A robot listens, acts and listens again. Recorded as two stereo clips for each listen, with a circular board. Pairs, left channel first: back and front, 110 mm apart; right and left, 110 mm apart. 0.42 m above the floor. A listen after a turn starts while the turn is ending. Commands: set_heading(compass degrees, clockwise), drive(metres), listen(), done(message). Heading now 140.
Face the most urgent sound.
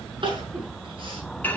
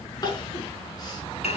set_heading(180)
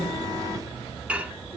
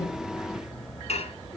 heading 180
listen()
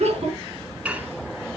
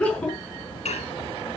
set_heading(190)
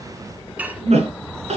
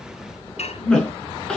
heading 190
set_heading(200)
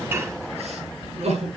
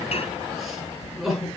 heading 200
done("Found it: crying, straight ahead, over 4 m away.")